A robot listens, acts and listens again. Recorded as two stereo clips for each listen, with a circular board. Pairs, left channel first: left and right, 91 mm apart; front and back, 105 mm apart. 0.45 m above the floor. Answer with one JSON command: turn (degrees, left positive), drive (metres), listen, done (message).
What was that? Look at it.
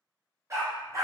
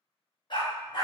{"turn": -40}
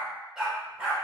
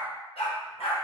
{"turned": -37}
{"turn": -15}
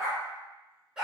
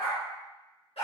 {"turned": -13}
{"turn": -10}
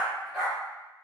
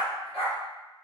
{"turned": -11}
{"done": "Facing the dog barking."}